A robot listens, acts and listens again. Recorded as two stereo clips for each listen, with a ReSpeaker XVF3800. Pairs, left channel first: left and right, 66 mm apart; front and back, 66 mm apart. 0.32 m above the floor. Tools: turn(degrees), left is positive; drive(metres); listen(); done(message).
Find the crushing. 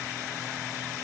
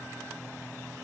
listen()
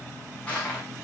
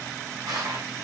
turn(degrees=160)
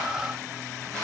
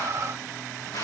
turn(degrees=10)
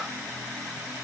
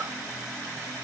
listen()
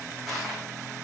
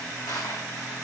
done("Found it: crushing, straight ahead.")